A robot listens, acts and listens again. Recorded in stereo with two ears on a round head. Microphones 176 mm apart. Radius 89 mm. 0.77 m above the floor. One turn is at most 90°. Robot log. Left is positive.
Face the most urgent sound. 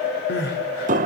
note: The crying: about 60° left or 120° left.
cmd yaw +60
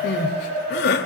note: So it is at 55° left.
cmd yaw +55
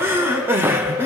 note: The crying is now 10° right.
cmd yaw -10
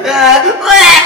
end: Found it: crying, straight ahead, 2 to 4 m away.